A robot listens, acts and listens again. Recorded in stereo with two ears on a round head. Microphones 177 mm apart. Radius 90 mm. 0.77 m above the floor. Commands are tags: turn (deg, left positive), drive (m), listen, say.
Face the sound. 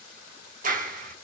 <turn deg="-40"/>
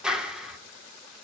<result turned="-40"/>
<say>Facing the clap, 1 to 2 m away.</say>